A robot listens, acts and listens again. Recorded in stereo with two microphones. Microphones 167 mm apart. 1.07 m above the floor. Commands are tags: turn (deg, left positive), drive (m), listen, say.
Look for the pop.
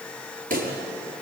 <turn deg="-55"/>
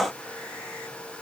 <listen/>
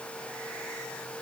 <say>I heard a pop, but can't make it out now. It was about straight ahead or 70° right.</say>